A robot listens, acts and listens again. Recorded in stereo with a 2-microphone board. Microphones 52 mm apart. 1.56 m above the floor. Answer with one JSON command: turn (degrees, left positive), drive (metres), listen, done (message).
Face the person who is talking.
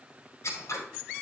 {"listen": true}
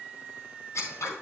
{"listen": true}
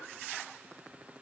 {"done": "I can't make out anyone speaking to turn to."}